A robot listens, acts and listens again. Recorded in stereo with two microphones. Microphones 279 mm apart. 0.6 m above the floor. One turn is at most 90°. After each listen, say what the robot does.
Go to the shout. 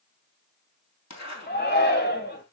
Turn 35° left.
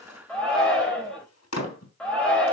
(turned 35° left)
Drive 1.0 m forward.
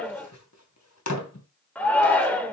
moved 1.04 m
Drive 1.0 m forward.
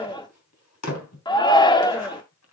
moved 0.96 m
Turn 20° left.
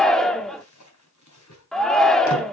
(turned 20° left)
Drive 1.0 m forward.
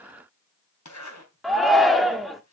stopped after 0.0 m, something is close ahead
Arrived at the shout, straight ahead.